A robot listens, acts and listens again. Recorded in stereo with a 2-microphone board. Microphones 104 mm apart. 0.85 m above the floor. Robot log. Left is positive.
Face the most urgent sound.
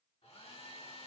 cmd idle
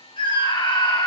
note: The scream: about 50° left or 130° left.
cmd yaw +50
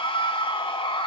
note: So it is at 70° left.
cmd yaw +70
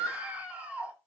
note: The scream is now 15° right.
cmd yaw -15
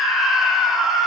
end: Facing the scream, 1 to 2 m away.